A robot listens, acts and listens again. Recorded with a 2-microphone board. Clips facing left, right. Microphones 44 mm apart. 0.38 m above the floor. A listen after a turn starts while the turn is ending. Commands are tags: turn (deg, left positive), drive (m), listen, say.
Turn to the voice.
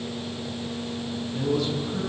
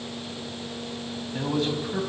<turn deg="-45"/>
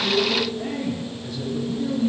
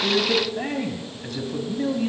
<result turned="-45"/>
<turn deg="-85"/>
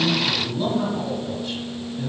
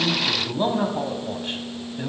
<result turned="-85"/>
<turn deg="-40"/>
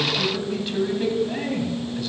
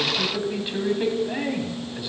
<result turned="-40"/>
<turn deg="-15"/>
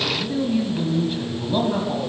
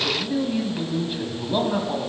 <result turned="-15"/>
<say>Facing the man speaking.</say>